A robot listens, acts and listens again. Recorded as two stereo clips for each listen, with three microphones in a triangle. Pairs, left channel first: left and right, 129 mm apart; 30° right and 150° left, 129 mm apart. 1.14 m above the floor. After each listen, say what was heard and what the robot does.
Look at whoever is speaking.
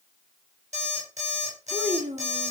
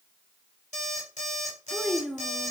The child speaking: 120° right. Turn 120° right.
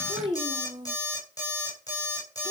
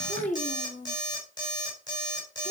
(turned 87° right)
The child speaking is now 35° right. Turn 35° right.
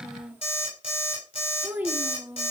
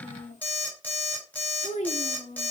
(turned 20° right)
The child speaking is now 15° right. Turn 15° right.
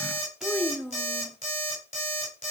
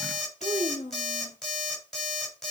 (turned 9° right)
Facing the child speaking, 1 to 2 m away.